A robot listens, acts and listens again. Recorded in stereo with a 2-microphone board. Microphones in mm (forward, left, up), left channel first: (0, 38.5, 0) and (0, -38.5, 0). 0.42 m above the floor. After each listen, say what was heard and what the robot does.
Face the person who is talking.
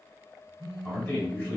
Turn 30° left.
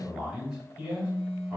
So it is at 15° right. Turn 15° right.
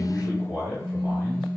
Found it: a man speaking, straight ahead, 1 to 2 m away.